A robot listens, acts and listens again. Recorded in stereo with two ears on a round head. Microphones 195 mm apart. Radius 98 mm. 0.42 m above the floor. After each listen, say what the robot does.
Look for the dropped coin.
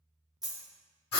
Turn 30° right.
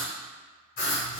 Keep listening.
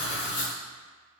I heard a dropped coin, but can't make it out now. It was about 25° left or 145° right.